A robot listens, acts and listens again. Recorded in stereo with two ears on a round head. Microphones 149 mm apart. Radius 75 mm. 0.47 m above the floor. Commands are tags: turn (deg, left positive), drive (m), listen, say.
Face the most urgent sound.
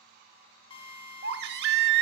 <turn deg="-70"/>
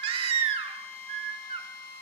<turn deg="-35"/>
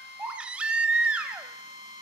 <say>Facing the baby crying, under 1 m away.</say>